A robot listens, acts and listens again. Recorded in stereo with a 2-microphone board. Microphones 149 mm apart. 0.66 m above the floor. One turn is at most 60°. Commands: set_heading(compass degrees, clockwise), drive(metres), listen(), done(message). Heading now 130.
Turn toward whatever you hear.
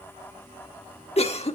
set_heading(85)
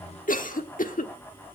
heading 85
set_heading(25)
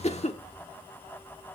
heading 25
set_heading(330)
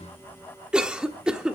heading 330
done("Facing the cough, 1 to 2 m away.")